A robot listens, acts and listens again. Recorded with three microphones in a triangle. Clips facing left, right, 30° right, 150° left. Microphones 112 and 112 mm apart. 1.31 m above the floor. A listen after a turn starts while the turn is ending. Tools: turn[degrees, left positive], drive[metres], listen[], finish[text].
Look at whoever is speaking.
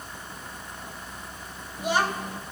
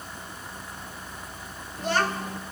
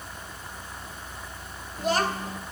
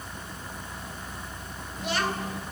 Thought: The child speaking: 15° left.
Action: turn[15]
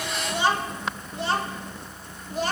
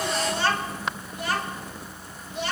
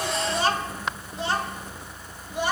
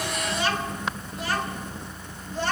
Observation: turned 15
Thought: The child speaking is now 45° left.
Action: turn[45]
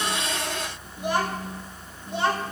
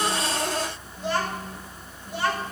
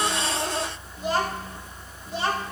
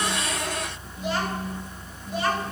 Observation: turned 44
Thought: The child speaking is now 25° left.
Action: turn[25]
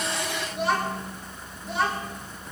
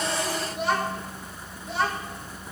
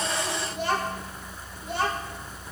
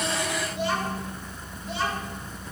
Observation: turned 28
Action: finish[Facing the child speaking.]